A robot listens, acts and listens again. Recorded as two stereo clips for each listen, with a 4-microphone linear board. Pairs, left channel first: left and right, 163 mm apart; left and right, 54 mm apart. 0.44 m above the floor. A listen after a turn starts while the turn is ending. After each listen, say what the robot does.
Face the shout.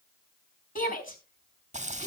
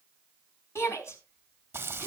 Turn 60° left.
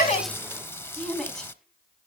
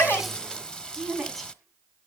Found it: a shout, straight ahead, over 4 m away.